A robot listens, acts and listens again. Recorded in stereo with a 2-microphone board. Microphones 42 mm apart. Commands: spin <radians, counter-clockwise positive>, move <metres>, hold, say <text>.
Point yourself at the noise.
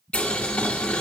spin 0.52
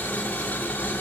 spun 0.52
spin 2.01
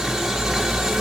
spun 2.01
spin -0.17
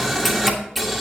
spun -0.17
say Facing the boiling.